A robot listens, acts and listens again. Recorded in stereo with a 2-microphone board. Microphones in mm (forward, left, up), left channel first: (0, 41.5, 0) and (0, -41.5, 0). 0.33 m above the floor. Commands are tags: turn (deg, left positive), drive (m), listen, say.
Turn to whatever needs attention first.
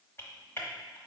<listen/>
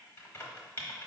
<listen/>
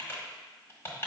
<say>I can't make out anything urgent to turn to.</say>